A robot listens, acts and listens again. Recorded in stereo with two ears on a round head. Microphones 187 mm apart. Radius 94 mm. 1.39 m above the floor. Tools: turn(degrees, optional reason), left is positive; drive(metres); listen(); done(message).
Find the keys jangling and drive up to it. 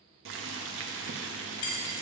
turn(degrees=75, reason="The keys jangling: about 75° left or 105° left.")
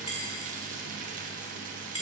turn(degrees=20, reason="So it is at 20° left.")
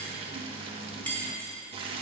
turn(degrees=10, reason="The keys jangling is now 10° left.")
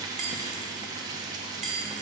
drive(metres=1.0)
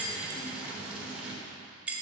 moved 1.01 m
drive(metres=1.0)
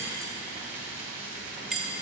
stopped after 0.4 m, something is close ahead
done("Arrived at the keys jangling, straight ahead.")